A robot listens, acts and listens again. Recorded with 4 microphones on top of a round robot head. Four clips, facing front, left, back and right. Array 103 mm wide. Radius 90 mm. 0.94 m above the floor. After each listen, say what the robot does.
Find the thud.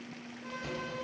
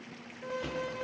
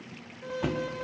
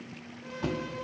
Turn 145° right.
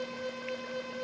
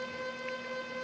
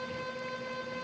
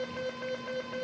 I heard a thud from this way, but can't make it out now.